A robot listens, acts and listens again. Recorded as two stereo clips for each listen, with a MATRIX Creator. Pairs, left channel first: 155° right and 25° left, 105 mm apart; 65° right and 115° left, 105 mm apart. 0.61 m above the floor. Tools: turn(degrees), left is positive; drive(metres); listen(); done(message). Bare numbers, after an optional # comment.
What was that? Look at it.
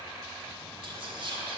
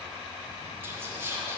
# The whispering: 50° left.
turn(50)
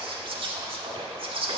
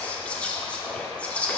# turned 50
# The whispering is now 10° left.
turn(10)
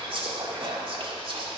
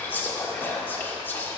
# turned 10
done("Facing the whispering, 1 to 2 m away.")